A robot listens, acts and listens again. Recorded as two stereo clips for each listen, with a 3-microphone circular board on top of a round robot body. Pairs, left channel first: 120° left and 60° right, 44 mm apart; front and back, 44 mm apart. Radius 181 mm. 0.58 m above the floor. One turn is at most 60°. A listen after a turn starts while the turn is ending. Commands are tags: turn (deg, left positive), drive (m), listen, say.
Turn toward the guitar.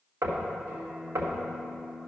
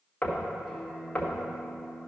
<turn deg="-60"/>
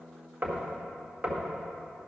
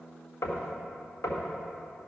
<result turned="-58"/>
<turn deg="-45"/>
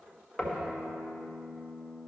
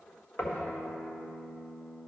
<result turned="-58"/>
<turn deg="10"/>
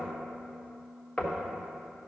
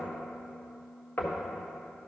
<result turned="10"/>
<say>Found it: a guitar, straight ahead.</say>